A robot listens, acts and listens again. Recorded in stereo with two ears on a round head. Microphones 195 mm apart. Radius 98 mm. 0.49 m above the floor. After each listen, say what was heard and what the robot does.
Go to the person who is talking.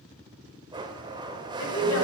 The woman speaking: about 65° left or 115° left. Turn 65° left.
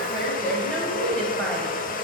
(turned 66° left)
Drive 1.0 m forward.
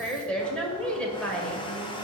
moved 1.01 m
Drive 1.0 m forward.
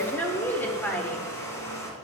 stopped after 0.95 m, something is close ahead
The woman speaking is now 15° left. Turn 15° left.
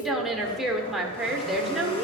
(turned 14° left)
Arrived at the woman speaking, straight ahead.